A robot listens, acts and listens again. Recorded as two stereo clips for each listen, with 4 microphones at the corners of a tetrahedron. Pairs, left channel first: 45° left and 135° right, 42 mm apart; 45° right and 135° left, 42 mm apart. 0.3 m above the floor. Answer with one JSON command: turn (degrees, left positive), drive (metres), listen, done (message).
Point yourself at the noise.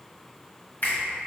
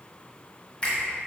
{"turn": 15}
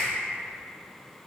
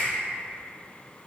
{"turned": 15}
{"listen": true}
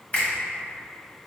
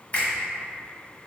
{"done": "Found it: a finger snap, straight ahead, 1 to 2 m away."}